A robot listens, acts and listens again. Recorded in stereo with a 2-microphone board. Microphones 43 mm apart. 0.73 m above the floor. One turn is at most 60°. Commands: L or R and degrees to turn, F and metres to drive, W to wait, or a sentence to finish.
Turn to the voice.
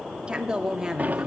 R30
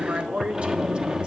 R60
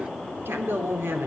R60
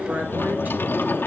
R55
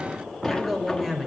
Found it: a woman speaking, straight ahead.